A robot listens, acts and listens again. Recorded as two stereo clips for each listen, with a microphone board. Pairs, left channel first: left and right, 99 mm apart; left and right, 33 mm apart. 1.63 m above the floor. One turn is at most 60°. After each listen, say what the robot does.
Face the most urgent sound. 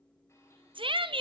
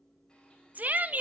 Turn 60° right.
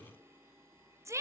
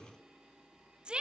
Turn 35° right.
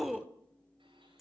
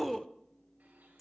Facing the shout, under 1 m away.